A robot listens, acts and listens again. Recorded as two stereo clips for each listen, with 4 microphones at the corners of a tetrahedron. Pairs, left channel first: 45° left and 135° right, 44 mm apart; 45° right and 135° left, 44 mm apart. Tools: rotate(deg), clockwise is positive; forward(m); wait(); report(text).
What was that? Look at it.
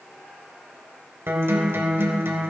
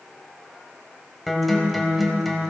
rotate(135)
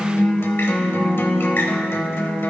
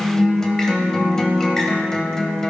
rotate(-30)
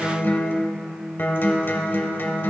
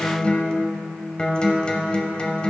rotate(-20)
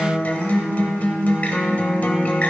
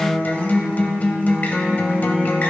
report("Found it: a guitar, straight ahead, 1 to 2 m away.")